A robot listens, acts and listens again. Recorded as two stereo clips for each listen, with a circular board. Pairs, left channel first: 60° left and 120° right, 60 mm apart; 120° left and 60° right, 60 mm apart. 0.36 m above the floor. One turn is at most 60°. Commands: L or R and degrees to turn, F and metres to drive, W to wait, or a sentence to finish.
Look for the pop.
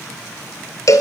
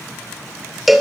W
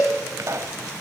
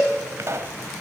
R60
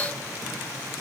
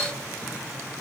R35
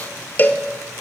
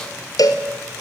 I heard a pop from this way, but can't make it out now.